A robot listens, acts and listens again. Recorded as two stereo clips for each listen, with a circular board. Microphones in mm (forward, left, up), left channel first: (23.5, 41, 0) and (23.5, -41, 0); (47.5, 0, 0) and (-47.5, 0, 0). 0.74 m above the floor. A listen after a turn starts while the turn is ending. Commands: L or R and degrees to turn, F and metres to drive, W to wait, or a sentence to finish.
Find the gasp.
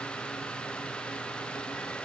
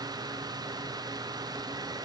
W
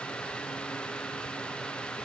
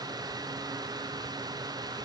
W
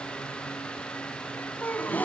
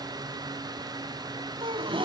L160
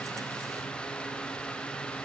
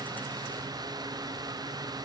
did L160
Facing where the gasp came from. I can't hear it now.